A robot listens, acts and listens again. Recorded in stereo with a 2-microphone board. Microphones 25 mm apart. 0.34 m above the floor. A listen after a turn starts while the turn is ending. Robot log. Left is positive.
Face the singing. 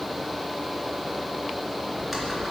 cmd idle
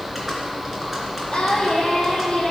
note: The singing: about 40° left or 140° left.
cmd yaw +40
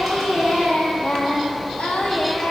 note: So it is at 95° left.
cmd yaw +95
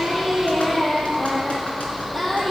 note: The singing is now 15° left.
cmd yaw +15
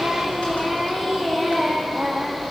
end: Facing the singing.